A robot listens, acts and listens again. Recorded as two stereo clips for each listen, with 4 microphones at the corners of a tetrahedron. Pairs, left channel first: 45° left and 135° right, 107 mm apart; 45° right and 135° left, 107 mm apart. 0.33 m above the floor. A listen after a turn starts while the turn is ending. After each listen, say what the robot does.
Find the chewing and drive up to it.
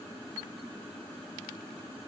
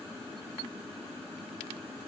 Keep listening.
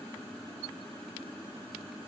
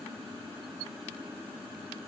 Keep listening.
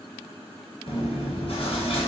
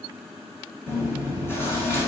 Turn 20° left.
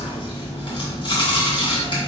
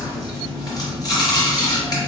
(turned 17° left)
Drive 1.0 m forward.
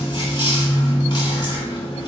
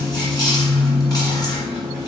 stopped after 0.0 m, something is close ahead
Something is in my way. I am facing the chewing but have not reached it.